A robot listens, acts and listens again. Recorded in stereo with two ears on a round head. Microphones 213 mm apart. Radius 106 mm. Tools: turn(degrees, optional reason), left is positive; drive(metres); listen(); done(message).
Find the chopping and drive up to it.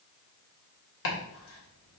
turn(degrees=60, reason="The chopping: about 60° left or 120° left.")
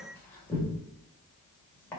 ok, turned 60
turn(degrees=10, reason="So it is at 10° left.")
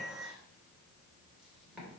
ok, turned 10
listen()
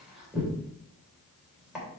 drive(metres=1.0)
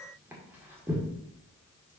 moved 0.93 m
turn(degrees=-10, reason="The chopping is now 10° right.")
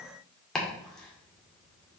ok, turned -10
drive(metres=1.0)
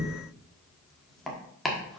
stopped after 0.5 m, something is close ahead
done("I am next to the chopping.")